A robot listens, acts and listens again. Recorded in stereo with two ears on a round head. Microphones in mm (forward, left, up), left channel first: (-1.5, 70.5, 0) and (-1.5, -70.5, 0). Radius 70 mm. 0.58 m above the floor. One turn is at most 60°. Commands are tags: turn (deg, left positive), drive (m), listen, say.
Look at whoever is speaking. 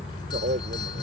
<turn deg="-55"/>
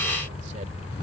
<listen/>
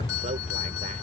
<listen/>
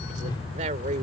<turn deg="-60"/>
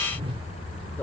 <listen/>
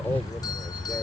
<listen/>
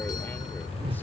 <say>Facing where the man speaking came from. I can't hear it now.</say>